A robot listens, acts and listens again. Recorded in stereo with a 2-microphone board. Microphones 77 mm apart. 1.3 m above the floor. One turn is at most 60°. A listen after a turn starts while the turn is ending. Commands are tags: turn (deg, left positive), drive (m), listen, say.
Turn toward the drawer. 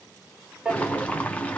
<turn deg="-30"/>
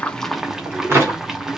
<turn deg="-60"/>
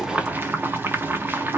<turn deg="-60"/>
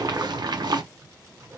<turn deg="-25"/>
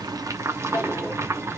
<say>Facing where the drawer came from. I can't hear it now.</say>